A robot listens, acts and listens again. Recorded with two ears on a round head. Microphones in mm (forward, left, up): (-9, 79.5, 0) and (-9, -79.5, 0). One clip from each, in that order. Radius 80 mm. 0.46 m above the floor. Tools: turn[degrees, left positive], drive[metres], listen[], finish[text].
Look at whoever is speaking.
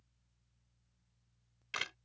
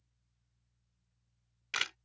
Action: listen[]
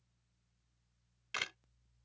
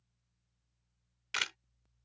Action: listen[]
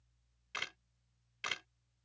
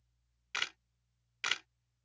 Action: finish[I can't make out anyone speaking to turn to.]